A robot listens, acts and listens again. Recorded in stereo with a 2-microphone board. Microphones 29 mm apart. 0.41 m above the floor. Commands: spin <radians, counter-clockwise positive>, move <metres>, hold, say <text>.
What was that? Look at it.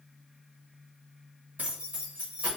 spin -0.87
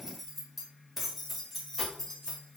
spin 0.44
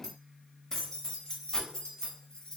spin 0.44
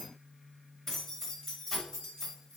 spin 0.26
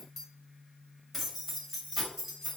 say Found it: keys jangling, straight ahead.